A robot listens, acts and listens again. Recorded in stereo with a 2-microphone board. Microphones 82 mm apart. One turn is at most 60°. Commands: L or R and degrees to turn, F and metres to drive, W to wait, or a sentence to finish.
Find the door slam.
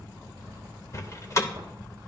L40
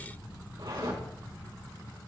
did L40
W
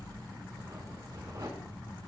I heard a door slam, but can't make it out now. It was about straight ahead or 100° left.